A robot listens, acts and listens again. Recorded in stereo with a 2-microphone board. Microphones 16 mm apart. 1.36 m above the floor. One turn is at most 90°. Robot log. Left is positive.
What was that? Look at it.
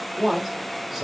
note: The man speaking: about 20° right or 160° right.
cmd yaw -20
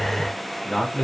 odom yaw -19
note: So it is at 10° left.
cmd yaw +10
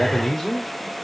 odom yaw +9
note: The man speaking is now 10° left.
cmd yaw +10
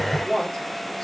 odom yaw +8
note: The man speaking is now 10° left.
cmd yaw +10
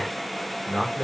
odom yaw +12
note: The man speaking is now 10° left.
cmd yaw +10
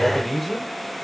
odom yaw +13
end: Facing the man speaking.